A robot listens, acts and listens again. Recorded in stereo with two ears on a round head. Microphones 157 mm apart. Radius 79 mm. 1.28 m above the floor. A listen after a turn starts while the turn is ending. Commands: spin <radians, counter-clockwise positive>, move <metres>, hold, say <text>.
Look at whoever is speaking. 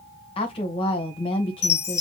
spin 0.52
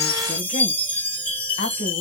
spin 2.01
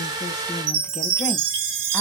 hold
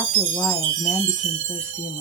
spin 0.17
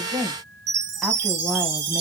say Found it: a woman speaking, straight ahead.